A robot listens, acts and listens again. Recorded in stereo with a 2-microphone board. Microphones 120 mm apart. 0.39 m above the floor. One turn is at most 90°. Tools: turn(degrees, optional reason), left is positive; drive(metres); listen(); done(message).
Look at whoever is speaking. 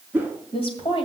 turn(degrees=50, reason="The woman speaking: about 50° left or 130° left.")
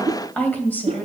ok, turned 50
turn(degrees=15, reason="So it is at 15° left.")
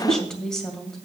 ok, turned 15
done("Facing the woman speaking, 2 to 4 m away.")